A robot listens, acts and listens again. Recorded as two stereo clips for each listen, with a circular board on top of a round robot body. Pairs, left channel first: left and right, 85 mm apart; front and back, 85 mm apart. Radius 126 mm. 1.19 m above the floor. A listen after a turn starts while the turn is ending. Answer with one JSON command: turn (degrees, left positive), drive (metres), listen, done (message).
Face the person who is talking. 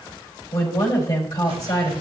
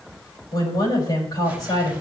{"turn": 40}
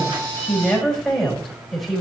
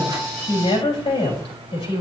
{"done": "Found it: a woman speaking, straight ahead."}